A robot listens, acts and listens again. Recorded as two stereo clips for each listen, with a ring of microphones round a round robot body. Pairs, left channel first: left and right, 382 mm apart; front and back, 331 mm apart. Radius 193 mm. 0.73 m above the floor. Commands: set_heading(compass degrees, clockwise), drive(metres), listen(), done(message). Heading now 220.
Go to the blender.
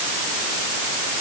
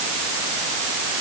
listen()
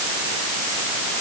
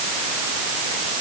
listen()
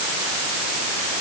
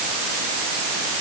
done("I can't make out a blender to turn to.")